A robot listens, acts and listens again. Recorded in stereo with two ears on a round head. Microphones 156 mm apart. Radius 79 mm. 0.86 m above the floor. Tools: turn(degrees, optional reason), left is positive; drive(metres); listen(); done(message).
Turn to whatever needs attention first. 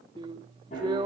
listen()
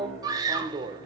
turn(degrees=-25, reason="The scream: about 25° right or 155° right.")
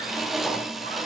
listen()
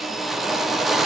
listen()
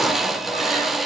done("I heard a scream, but can't make it out now. It was about straight ahead or 130° right.")